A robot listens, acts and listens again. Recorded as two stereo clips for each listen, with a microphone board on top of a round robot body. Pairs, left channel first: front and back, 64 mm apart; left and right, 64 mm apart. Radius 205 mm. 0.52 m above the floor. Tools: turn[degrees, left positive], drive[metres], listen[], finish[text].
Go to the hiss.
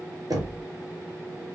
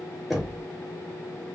Action: listen[]
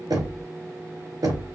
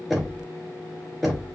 Action: listen[]
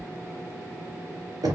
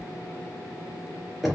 Action: finish[I can't make out a hiss to turn to.]